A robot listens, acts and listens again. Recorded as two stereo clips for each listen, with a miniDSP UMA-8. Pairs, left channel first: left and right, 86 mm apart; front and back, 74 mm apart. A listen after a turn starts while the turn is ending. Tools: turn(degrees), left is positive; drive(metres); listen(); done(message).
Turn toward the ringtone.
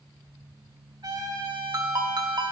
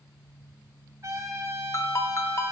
turn(degrees=-50)
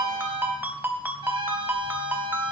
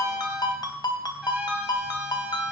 turn(degrees=-20)
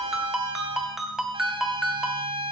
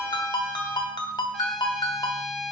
done("Found it: a ringtone, straight ahead, 2 to 4 m away.")